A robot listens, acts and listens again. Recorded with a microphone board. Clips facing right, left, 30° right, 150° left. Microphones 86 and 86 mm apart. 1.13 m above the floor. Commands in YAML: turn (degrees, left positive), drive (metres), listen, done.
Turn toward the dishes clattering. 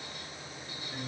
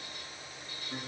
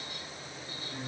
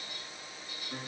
listen: true
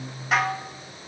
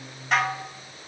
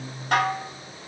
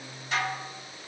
done: "Facing the dishes clattering."